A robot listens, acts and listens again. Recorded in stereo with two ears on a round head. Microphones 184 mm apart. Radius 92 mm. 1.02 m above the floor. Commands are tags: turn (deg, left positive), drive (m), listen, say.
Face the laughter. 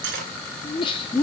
<turn deg="20"/>
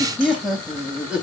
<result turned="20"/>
<say>Found it: laughter, straight ahead.</say>